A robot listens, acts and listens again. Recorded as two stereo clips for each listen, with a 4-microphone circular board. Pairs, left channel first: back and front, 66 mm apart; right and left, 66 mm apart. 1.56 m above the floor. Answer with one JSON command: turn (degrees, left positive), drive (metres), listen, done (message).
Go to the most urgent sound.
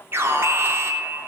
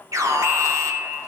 {"turn": 50}
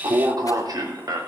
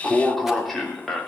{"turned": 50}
{"drive": 1.0}
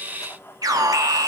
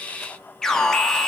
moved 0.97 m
{"turn": -10}
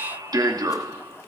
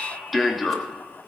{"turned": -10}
{"drive": 1.0}
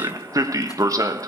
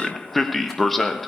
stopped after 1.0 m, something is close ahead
{"done": "I am next to the alarm."}